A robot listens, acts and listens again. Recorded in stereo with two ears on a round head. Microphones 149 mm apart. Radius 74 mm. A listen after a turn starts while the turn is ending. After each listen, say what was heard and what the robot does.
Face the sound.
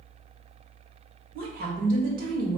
The woman speaking: about 55° right or 125° right. Turn 55° right.
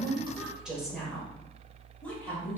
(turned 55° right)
So it is at 15° left. Turn 15° left.
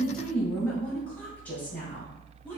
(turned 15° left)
The woman speaking is now 15° left. Turn 15° left.
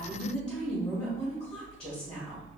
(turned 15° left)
Facing the woman speaking, 2 to 4 m away.